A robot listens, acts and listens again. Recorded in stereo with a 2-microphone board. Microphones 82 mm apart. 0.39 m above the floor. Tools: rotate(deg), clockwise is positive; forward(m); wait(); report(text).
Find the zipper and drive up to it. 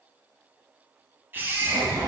rotate(90)
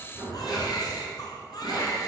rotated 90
forward(1.0)
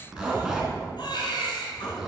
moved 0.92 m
rotate(10)
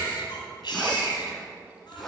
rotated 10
forward(1.0)
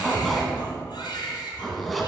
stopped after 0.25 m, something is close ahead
report("I am next to the zipper.")